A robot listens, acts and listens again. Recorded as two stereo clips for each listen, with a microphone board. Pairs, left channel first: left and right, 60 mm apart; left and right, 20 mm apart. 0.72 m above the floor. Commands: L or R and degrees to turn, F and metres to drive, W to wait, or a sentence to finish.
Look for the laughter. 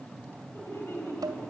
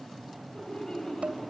L40
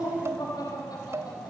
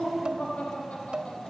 L100
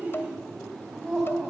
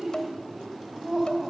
Found it: laughter, straight ahead, over 4 m away.